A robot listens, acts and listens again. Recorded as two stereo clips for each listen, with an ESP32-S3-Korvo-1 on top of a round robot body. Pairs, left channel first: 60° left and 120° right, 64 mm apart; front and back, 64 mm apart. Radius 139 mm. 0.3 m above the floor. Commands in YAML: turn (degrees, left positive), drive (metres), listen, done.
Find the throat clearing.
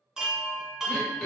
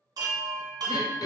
turn: -20
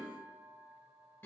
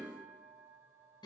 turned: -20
done: "Facing the throat clearing, 1 to 2 m away."